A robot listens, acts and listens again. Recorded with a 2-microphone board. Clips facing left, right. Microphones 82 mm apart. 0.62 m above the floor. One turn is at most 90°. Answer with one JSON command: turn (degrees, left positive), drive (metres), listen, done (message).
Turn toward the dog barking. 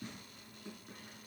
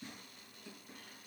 {"listen": true}
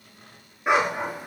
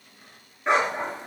{"turn": 30}
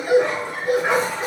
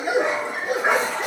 {"turn": -20}
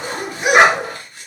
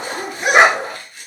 {"done": "Facing the dog barking."}